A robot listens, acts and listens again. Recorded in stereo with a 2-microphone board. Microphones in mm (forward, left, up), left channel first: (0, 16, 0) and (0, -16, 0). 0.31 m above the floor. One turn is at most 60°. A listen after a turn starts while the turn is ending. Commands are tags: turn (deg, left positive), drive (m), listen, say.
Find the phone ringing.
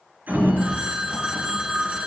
<turn deg="-30"/>
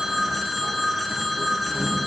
<say>Facing the phone ringing.</say>